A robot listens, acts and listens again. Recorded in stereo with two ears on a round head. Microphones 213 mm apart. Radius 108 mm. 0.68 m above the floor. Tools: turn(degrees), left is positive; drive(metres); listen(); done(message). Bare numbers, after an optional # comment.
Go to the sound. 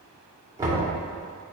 # The knocking: about 15° right or 165° right.
turn(-15)
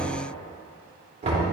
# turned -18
# So it is at 150° right.
turn(-150)
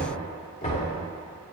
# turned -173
# The knocking is now 25° left.
turn(25)
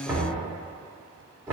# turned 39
# The knocking is now 15° right.
turn(-15)
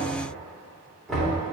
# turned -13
drive(1.0)
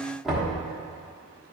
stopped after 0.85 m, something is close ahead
done("Arrived at the knocking, straight ahead.")